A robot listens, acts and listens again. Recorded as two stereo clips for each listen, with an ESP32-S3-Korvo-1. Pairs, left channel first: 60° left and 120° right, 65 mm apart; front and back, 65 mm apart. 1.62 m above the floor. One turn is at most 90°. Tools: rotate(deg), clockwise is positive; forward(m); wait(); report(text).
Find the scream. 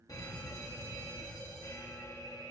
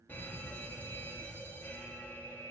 wait()
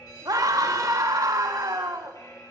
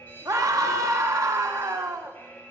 rotate(90)
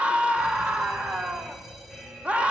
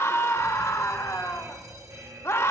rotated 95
rotate(50)
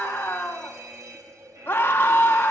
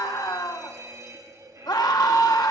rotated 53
report("Facing the scream.")